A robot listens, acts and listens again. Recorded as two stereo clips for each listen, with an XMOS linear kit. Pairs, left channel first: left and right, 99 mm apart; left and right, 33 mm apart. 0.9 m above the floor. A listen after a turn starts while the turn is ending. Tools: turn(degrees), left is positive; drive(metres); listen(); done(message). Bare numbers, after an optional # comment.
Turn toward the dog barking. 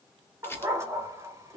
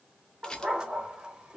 # The dog barking: about 25° right or 155° right.
turn(-25)
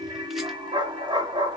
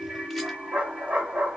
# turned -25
# So it is at 120° right.
turn(-120)
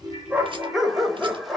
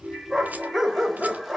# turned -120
done("Found it: a dog barking, straight ahead, under 1 m away.")